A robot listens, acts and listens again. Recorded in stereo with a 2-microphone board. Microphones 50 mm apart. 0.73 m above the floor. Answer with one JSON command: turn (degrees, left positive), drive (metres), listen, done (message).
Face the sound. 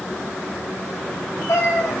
{"turn": 90}
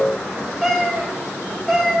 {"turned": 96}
{"done": "Facing the cat meowing."}